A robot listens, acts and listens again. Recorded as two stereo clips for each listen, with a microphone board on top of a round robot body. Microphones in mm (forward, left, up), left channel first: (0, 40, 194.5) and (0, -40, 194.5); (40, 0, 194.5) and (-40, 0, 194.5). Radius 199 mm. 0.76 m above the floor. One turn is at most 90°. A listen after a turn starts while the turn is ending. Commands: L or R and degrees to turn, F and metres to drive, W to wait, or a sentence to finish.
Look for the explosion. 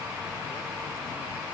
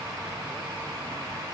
W
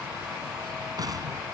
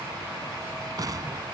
R90
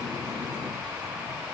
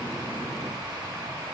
R45
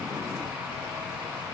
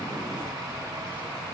I heard an explosion from this way, but can't make it out now.